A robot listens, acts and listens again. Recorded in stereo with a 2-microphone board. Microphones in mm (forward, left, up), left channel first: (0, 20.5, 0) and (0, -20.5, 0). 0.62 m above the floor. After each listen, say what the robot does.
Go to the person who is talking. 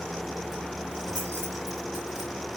Keep listening.
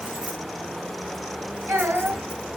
Turn 90° right.
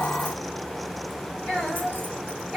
Drive 1.0 m forward.
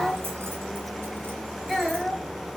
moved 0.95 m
Turn 10° left.
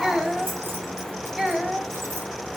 Drive 1.0 m forward.
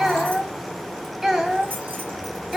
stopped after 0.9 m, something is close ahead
Arrived at the child speaking, straight ahead.